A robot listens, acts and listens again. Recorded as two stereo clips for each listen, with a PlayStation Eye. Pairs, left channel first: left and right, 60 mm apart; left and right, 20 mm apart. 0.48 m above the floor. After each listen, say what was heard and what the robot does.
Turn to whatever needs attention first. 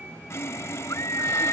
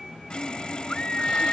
The scream: about 70° left or 110° left. Turn 70° left.
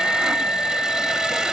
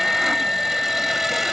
So it is at 25° left. Turn 25° left.
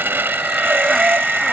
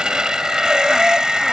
Keep listening.
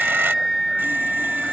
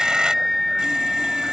Facing the scream.